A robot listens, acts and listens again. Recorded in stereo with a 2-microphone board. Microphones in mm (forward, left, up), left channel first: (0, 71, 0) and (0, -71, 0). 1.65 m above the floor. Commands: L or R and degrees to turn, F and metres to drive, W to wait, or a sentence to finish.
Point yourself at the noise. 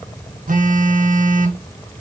R65
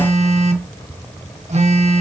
R50
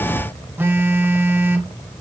R15
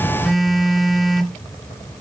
Found it: a phone buzzing, straight ahead, 1 to 2 m away.